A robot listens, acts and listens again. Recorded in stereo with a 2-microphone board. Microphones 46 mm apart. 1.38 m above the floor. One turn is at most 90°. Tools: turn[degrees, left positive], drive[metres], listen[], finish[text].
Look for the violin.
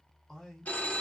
Action: listen[]
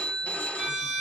Action: turn[-30]
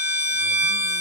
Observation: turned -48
Thought: So it is at 125° right.
Action: turn[-90]
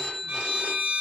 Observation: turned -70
Thought: The violin is now 55° right.
Action: turn[-55]
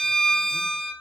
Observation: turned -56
Action: finish[Found it: a violin, straight ahead.]